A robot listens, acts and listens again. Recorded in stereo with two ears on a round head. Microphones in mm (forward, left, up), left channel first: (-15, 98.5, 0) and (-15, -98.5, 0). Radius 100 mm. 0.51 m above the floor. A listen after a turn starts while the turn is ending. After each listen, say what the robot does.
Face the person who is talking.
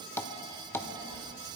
Turn 15° right.
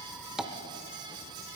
Facing the child speaking.